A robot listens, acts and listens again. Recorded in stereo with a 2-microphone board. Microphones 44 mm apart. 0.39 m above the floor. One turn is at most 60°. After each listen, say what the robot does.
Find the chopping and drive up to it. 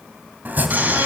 Turn 40° right.
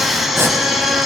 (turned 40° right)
Turn 60° right.
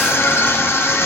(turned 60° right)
Turn 35° right.
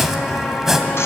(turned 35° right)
Turn 10° right.
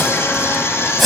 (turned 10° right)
Drive 1.0 m forward.
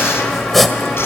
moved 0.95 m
Drive 1.0 m forward.
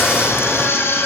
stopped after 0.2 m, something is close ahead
Keep listening.
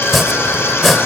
I am next to the chopping.